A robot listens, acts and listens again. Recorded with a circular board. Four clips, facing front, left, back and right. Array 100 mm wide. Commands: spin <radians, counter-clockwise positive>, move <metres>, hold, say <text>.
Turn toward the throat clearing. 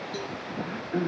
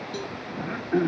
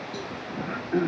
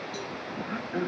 spin 2.01
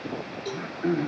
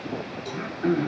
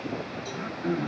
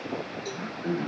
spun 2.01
spin 1.05
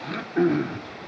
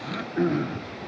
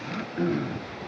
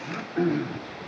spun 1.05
say Found it: throat clearing, straight ahead.